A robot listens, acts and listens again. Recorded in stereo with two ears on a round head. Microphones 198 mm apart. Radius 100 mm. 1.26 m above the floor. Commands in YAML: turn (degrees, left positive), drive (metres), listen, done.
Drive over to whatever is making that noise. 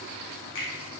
turn: 60
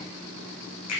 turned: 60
turn: 65
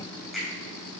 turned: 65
drive: 1.0
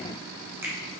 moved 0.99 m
turn: -10
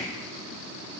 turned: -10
listen: true
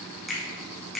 drive: 1.0
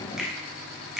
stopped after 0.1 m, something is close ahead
done: "I am next to the finger snap."